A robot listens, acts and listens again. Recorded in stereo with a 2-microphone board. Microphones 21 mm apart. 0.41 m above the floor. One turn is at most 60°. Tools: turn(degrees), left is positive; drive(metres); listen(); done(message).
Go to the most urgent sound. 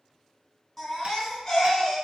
turn(degrees=15)
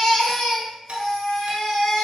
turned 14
turn(degrees=60)
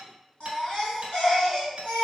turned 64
turn(degrees=60)
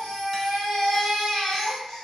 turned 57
turn(degrees=30)
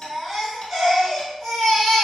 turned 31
drive(metres=1.0)
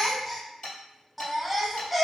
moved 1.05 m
drive(metres=1.0)
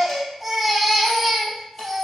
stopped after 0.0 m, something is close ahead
done("I am next to the baby crying.")